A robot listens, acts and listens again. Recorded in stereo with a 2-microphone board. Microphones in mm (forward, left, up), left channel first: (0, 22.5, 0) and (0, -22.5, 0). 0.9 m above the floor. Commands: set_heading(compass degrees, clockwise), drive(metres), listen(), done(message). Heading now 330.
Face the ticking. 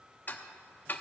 set_heading(285)
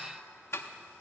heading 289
set_heading(199)
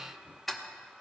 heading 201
done("Found it: ticking, straight ahead.")